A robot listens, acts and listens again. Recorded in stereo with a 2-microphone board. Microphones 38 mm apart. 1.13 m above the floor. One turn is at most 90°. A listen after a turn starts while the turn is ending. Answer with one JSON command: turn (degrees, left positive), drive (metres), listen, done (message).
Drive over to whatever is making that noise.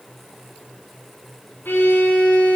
{"turn": 75}
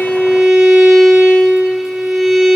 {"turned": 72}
{"drive": 1.0}
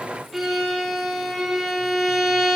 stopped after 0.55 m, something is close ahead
{"done": "Something is in my way. I am facing the violin but have not reached it."}